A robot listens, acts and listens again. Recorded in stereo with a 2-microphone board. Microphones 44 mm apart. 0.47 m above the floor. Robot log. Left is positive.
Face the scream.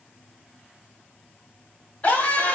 note: The scream: about 35° left or 145° left.
cmd yaw +35
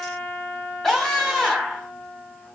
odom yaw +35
note: So it is at 10° left.
cmd yaw +10
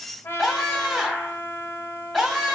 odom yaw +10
end: Facing the scream.